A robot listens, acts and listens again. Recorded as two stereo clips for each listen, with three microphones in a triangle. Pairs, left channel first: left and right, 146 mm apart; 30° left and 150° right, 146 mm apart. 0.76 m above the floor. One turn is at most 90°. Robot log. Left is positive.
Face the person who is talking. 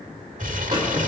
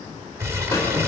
cmd idle
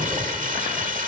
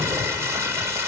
cmd idle
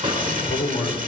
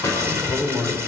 note: The man speaking: 110° left.
cmd yaw +90
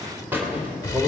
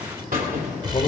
note: The man speaking is now 20° right.
cmd yaw -20
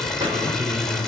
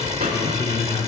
end: Facing the man speaking.